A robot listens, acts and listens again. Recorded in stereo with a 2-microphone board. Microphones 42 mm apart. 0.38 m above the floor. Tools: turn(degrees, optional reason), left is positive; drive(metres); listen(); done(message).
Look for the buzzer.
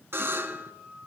turn(degrees=-65, reason="The buzzer: about 65° right or 115° right.")
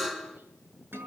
done("Found it: a buzzer, straight ahead.")